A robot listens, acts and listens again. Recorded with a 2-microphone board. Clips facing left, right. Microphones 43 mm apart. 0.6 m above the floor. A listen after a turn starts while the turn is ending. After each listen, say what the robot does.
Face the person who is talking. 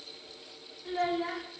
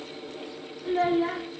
Turn 15° right.
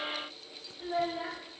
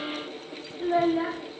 Turn 150° right.
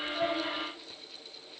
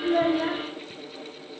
Keep listening.
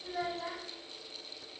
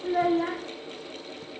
Turn 45° right.
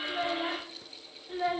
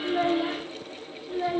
Turn 10° left.
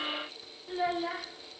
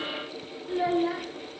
Found it: a child speaking, straight ahead, under 1 m away.